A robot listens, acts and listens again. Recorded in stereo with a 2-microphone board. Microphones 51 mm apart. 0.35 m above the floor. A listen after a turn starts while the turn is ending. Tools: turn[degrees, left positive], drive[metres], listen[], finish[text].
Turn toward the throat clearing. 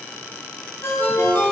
Action: listen[]
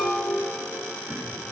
Action: listen[]
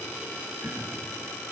Thought: The throat clearing: about 55° right or 125° right.
Action: turn[-55]
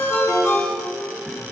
Action: listen[]
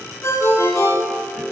Action: listen[]
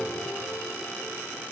Action: finish[I heard throat clearing, but can't make it out now. It was about straight ahead or 70° right.]